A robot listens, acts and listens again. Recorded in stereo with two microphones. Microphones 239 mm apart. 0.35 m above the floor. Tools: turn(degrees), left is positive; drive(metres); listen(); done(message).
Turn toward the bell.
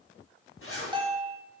turn(degrees=-20)
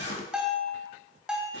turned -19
done("Facing the bell, 1 to 2 m away.")